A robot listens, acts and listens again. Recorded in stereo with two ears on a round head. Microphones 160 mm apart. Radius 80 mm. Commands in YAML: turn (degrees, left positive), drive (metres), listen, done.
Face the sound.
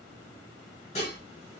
turn: 40
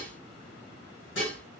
turn: 100
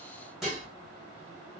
done: "Facing the dishes clattering."